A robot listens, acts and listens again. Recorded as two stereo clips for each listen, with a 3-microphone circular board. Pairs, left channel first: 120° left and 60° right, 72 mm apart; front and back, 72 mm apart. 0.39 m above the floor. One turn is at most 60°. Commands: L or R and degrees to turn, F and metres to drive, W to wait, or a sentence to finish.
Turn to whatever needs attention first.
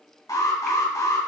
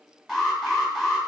L60
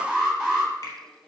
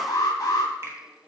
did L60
L35
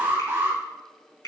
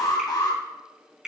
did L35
Found it: an alarm, straight ahead, 2 to 4 m away.